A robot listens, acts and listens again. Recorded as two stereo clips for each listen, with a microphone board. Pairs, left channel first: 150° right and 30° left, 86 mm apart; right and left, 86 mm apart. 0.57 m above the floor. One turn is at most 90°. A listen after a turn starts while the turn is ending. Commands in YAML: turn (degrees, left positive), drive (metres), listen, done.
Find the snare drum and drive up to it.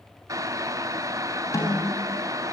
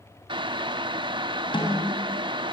turn: -90
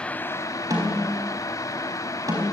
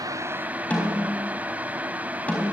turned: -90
turn: -15
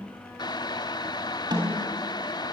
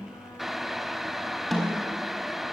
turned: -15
drive: 1.0
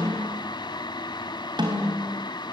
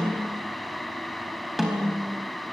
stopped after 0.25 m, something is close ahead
done: "Blocked. The snare drum is further on, straight ahead."